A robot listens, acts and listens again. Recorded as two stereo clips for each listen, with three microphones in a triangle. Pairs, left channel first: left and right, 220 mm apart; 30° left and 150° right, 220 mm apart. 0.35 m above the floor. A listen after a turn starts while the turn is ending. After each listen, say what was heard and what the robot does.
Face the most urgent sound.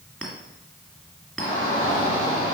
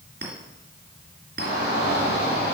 The shout: 20° left. Turn 20° left.
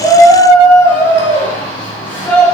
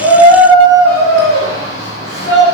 The shout is now 10° left. Turn 10° left.
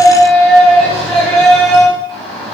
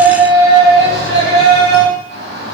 Found it: a shout, straight ahead, 2 to 4 m away.